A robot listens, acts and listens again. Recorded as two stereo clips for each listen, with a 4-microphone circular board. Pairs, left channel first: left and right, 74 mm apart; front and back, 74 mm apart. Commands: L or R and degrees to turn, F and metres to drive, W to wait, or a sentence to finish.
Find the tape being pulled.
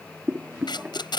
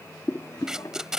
L95
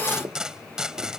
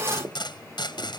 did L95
R10
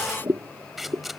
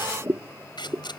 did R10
Facing the tape being pulled.